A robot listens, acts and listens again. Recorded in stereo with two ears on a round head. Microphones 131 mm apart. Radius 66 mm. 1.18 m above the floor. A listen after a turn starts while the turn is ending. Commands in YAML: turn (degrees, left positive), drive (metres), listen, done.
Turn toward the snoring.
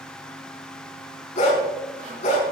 listen: true
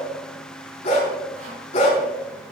listen: true
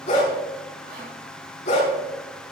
done: "I can't make out snoring to turn to."